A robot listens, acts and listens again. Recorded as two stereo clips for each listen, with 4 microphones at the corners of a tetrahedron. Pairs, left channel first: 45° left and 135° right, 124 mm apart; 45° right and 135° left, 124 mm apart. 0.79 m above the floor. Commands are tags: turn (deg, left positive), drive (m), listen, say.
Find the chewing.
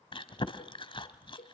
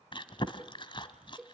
<say>Facing the chewing, 1 to 2 m away.</say>